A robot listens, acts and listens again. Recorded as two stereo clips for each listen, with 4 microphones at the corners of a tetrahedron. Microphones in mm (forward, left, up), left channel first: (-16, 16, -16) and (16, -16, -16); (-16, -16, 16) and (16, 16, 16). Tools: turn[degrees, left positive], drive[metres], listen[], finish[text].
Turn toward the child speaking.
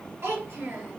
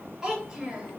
Thought: The child speaking: 25° right.
Action: turn[-25]
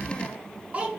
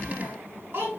Thought: The child speaking is now 15° left.
Action: turn[15]
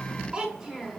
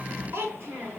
Thought: The child speaking is now 35° left.
Action: turn[35]
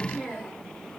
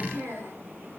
Thought: The child speaking is now 35° left.
Action: turn[35]
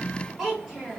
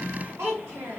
Thought: The child speaking is now 35° left.
Action: turn[35]
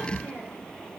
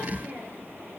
Action: finish[Facing the child speaking, 1 to 2 m away.]